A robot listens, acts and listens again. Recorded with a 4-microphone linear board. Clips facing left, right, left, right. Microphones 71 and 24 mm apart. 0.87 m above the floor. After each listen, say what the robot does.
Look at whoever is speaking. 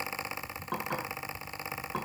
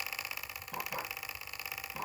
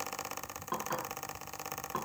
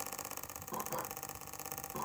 Keep listening.
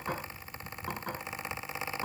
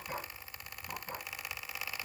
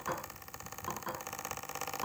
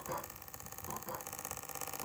Keep listening.
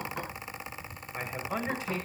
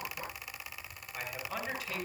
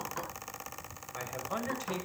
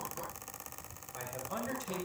Turn 25° left.
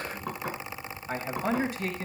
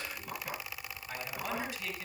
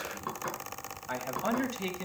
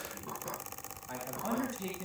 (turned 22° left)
Turn 130° left.
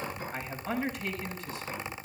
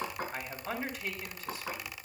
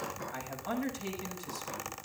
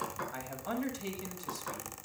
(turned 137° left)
Found it: a man speaking, straight ahead, over 4 m away.